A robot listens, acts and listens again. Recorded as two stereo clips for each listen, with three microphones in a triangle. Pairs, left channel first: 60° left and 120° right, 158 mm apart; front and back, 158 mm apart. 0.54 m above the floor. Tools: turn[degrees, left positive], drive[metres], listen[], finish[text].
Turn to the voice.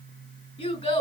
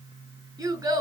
Thought: The child speaking: 110° left.
Action: turn[110]
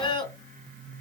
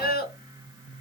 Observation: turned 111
Action: finish[Facing the child speaking.]